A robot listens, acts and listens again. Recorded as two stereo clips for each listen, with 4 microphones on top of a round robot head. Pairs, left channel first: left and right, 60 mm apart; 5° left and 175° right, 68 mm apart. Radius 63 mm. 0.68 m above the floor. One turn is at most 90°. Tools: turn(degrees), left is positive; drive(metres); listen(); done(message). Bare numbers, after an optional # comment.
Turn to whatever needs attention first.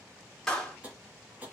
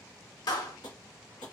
listen()
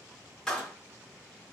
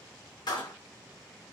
listen()
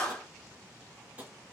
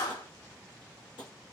done("I can't make out anything urgent, only tapping and a clap.")